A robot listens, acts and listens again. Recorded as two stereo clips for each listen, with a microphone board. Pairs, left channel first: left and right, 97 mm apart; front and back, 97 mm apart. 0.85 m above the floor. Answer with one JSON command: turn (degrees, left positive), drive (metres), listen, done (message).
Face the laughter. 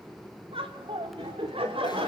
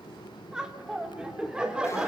{"turn": -100}
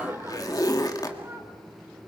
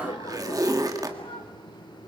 {"turn": -25}
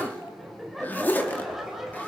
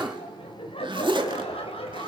{"done": "Found it: laughter, straight ahead, over 4 m away."}